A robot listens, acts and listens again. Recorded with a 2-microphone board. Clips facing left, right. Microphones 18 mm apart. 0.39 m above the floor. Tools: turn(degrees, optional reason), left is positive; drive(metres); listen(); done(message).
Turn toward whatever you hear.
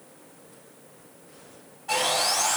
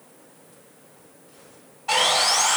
turn(degrees=-45, reason="The sawing: about 45° right or 135° right.")
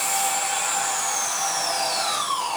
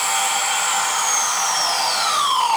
turn(degrees=-85, reason="So it is at 85° right.")
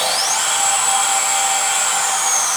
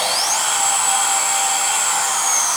turn(degrees=10, reason="The sawing is now 10° left.")
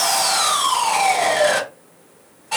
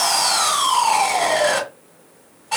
done("Facing the sawing, under 1 m away.")